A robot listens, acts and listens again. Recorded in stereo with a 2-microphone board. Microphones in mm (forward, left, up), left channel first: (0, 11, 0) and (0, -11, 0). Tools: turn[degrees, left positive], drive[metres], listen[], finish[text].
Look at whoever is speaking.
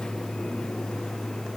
Action: listen[]
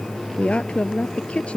Thought: The woman speaking: about 65° left or 115° left.
Action: turn[65]
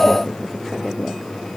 Action: listen[]
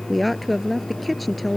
Action: finish[Facing the woman speaking.]